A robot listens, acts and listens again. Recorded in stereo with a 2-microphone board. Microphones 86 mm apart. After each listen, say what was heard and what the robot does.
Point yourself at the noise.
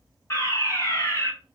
The fire alarm: about 30° left or 150° left. Turn 30° left.
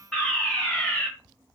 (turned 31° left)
Found it: a fire alarm, straight ahead.